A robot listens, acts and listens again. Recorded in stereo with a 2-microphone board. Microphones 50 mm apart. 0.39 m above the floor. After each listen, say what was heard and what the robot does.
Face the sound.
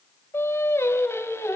The singing: about 65° left or 115° left. Turn 65° left.
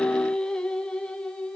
So it is at 15° left. Turn 15° left.
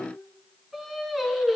Facing the singing, over 4 m away.